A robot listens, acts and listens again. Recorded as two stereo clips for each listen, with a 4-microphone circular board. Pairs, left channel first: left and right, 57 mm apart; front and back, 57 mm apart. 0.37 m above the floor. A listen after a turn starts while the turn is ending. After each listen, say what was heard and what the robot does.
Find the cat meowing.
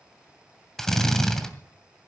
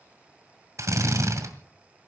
Keep listening.
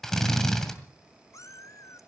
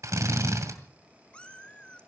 The cat meowing: 70° left. Turn 70° left.
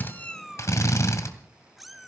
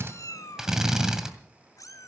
Facing the cat meowing, under 1 m away.